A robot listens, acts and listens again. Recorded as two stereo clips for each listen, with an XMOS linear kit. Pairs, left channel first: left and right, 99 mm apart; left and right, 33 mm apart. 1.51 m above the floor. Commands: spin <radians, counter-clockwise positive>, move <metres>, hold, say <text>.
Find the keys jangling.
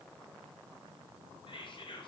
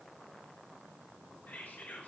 hold
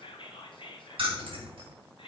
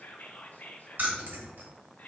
spin -1.13
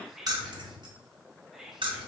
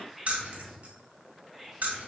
spin -1.05
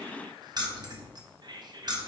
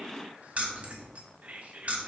spin -0.79
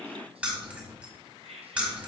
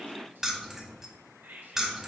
spin -0.26
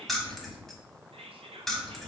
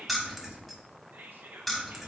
say Found it: keys jangling, straight ahead, 1 to 2 m away.